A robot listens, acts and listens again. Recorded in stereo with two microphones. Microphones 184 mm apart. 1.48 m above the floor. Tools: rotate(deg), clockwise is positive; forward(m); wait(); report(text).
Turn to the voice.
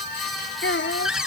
rotate(-90)
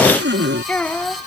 rotate(-10)
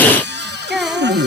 report("Found it: a child speaking, straight ahead.")